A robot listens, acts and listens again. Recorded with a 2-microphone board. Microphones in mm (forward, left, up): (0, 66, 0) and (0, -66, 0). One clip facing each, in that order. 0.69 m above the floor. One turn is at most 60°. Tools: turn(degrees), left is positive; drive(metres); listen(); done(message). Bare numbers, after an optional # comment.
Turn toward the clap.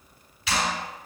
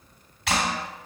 # The clap: about 70° right or 110° right.
turn(-60)
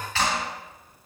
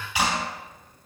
# So it is at 15° right.
turn(-15)
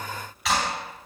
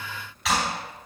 done("Found it: a clap, straight ahead, 2 to 4 m away.")